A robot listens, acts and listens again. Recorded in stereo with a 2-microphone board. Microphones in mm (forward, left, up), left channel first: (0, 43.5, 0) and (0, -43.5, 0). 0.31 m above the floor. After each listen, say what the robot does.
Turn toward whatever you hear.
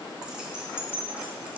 Turn 30° right.
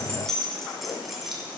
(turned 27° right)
Turn 30° right.
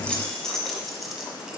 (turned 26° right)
Turn 30° left.
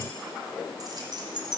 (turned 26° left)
Turn 55° right.
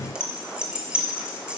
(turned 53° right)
Turn 10° right.
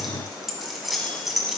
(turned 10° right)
Facing the keys jangling.